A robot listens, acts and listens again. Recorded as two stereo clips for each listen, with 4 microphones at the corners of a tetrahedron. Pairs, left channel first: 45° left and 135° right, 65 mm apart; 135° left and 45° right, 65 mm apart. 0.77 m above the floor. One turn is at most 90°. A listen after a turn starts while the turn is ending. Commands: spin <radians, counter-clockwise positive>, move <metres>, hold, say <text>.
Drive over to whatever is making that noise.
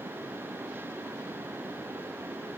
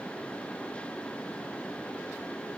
hold
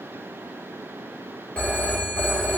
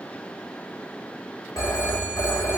spin 1.57
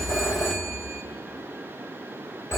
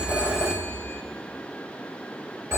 move 1.0
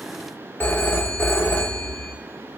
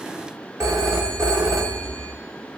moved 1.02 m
spin -0.26
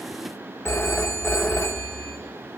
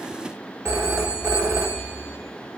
move 1.0
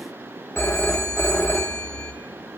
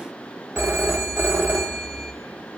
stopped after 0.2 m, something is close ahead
say Arrived at the phone ringing, straight ahead.